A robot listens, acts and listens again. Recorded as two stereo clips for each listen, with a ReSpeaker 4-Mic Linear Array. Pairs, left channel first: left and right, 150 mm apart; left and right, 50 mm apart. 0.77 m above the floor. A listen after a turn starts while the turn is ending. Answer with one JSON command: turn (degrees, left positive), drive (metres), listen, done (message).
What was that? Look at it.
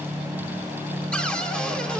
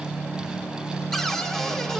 {"turn": 30}
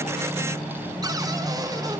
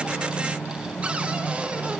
{"turn": -25}
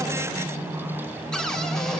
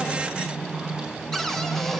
{"done": "Facing the cupboard door, 1 to 2 m away."}